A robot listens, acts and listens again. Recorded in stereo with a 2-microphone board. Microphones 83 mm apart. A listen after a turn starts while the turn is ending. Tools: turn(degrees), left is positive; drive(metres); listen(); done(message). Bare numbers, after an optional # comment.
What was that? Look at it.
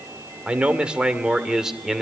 turn(-30)
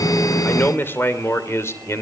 # So it is at 35° left.
turn(35)
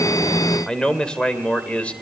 # The man speaking is now 15° left.
turn(15)
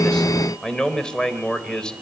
# The man speaking is now 10° left.
turn(10)
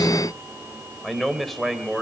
done("Found it: a man speaking, straight ahead.")